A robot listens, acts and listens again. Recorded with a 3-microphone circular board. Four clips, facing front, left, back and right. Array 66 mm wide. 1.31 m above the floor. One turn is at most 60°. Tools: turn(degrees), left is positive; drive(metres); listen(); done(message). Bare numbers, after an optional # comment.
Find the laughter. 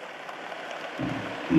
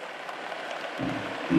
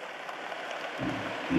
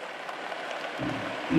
# The laughter: 65° left.
turn(60)
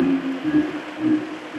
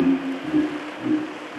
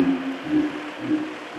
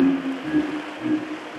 # The laughter is now 25° left.
turn(25)
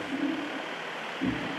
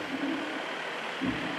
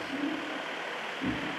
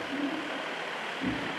# The laughter is now 35° left.
turn(35)
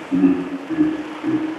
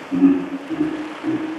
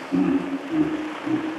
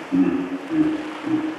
# The laughter is now 20° left.
turn(20)
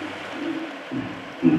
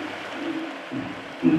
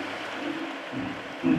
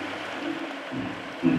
# The laughter is now 10° left.
turn(10)
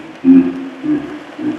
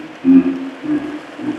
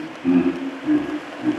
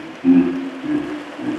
done("Found it: laughter, straight ahead, 2 to 4 m away.")